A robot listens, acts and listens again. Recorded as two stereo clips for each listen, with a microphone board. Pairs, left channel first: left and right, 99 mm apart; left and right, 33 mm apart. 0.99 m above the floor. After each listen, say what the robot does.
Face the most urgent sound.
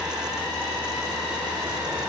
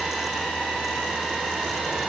Keep listening.
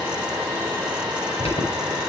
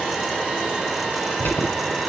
Turn 90° left.
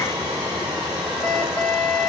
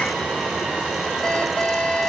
Turn 10° left.
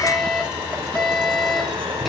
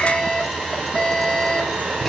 Found it: an alarm, straight ahead.